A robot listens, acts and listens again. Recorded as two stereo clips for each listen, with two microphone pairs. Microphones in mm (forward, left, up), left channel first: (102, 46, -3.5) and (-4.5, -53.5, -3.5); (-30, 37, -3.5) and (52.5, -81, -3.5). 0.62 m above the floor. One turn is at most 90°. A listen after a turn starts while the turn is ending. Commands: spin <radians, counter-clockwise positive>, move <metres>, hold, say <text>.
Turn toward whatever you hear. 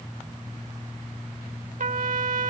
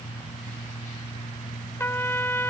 spin -1.57
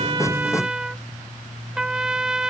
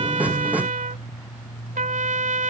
spin -0.87
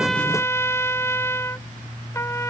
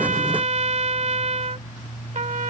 spin -0.44
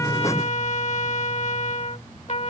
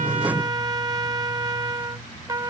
say Facing the trumpet.